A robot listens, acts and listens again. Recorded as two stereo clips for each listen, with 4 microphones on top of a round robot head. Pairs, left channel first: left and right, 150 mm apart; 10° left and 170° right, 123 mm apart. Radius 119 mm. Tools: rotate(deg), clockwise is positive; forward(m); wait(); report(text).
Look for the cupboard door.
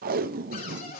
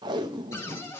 rotate(-75)
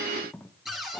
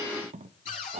report("Facing the cupboard door.")